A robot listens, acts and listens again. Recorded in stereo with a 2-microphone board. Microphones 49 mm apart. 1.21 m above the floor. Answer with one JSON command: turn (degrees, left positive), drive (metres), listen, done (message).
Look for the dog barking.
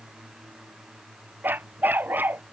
{"turn": -40}
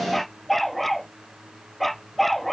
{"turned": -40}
{"done": "Facing the dog barking."}